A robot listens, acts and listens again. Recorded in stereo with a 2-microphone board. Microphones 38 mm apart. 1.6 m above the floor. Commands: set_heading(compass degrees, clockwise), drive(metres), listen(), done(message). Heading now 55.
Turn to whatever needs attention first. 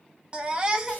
set_heading(80)
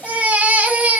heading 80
set_heading(210)
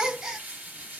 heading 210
set_heading(235)
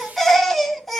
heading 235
done("Found it: a baby crying, straight ahead.")